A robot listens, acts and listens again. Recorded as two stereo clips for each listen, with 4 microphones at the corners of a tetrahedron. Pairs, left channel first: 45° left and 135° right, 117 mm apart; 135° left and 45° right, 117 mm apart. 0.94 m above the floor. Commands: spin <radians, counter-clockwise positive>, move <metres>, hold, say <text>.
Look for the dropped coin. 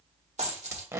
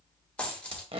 spin -2.53
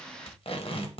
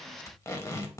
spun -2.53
say I heard a dropped coin from this way, but can't make it out now.